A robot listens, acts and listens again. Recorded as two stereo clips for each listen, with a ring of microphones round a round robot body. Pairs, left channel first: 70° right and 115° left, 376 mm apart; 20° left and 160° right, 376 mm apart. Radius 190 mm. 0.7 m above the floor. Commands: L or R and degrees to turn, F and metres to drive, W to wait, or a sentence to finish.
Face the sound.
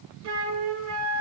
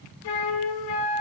L55
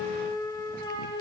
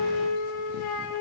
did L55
L10
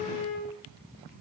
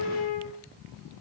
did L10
Facing the flute, 1 to 2 m away.